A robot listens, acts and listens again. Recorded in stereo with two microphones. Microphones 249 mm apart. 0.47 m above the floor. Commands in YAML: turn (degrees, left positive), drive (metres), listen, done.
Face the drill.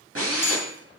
turn: -60
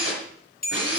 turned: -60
turn: -55
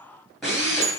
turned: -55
done: "Found it: a drill, straight ahead."